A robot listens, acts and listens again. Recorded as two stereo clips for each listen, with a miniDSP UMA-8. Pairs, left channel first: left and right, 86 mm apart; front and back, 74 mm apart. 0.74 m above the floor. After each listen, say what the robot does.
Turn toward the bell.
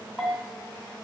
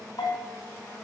Facing the bell.